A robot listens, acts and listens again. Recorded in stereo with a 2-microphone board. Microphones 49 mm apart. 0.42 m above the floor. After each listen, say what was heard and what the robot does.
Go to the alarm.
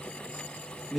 Keep listening.
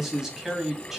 Keep listening.
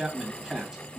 I can't make out an alarm to turn to.